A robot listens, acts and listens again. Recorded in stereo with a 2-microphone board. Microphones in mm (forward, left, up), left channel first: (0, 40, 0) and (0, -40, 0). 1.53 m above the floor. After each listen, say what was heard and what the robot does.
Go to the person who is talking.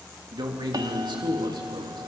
The man speaking: about 75° right or 105° right. Turn 75° right.
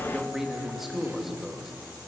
Drive 1.0 m forward.
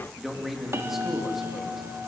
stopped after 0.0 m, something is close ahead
Blocked. The man speaking is further on, straight ahead.